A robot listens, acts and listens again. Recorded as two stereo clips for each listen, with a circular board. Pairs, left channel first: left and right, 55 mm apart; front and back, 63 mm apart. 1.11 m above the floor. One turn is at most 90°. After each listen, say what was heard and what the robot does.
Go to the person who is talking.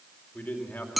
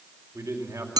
The man speaking: 150° left. Turn 90° left.
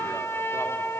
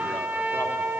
Nothing new. It was at 60° left. Turn 60° left.
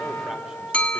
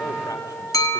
Keep listening.
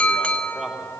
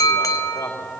I heard a man speaking from this way, but can't make it out now. I did not reach it.